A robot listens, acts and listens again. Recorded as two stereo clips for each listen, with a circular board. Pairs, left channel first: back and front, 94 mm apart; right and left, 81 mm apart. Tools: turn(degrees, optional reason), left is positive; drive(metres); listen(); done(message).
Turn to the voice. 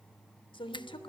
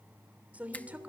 turn(degrees=160, reason="The woman speaking: 160° left.")
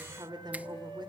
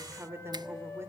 turn(degrees=35, reason="The woman speaking is now 35° left.")
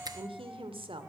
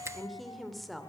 done("Facing the woman speaking.")